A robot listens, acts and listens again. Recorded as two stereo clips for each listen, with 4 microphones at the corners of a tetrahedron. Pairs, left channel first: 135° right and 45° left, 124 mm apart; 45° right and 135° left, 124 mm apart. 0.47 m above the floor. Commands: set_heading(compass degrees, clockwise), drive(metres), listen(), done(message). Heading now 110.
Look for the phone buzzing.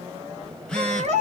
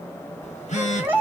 set_heading(160)
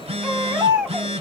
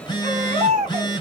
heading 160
set_heading(150)
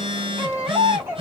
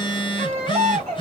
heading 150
done("Found it: a phone buzzing, straight ahead, 1 to 2 m away.")